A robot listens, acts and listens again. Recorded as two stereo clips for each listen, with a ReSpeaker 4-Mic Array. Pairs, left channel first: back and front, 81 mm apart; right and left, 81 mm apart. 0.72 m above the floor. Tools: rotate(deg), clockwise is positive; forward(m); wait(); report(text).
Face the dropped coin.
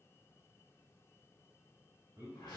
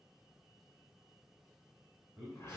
wait()
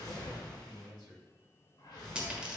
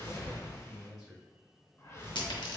rotate(75)
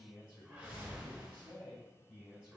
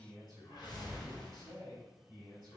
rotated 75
report("Facing where the dropped coin came from. I can't hear it now.")